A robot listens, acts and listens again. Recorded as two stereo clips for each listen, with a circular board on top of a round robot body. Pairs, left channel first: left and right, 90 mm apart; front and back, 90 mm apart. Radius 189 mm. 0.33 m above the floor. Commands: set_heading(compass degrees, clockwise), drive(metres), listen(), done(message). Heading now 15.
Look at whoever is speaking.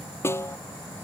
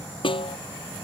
listen()
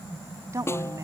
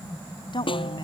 set_heading(50)
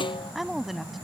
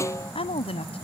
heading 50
done("Found it: a woman speaking, straight ahead.")